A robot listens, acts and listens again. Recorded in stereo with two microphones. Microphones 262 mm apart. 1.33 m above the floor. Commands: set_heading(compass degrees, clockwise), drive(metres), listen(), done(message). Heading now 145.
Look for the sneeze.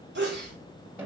set_heading(185)
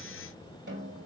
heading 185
listen()
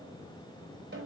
done("I heard a sneeze, but can't make it out now. It was about straight ahead or 100° right.")